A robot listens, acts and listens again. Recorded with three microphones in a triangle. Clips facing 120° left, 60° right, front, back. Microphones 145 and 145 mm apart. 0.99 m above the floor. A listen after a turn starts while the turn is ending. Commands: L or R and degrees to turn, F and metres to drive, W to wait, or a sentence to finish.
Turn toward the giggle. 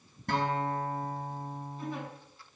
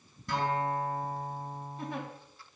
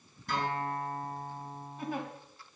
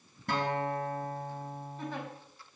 R80
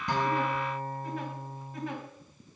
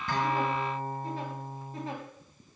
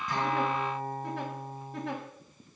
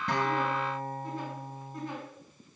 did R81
Facing the giggle.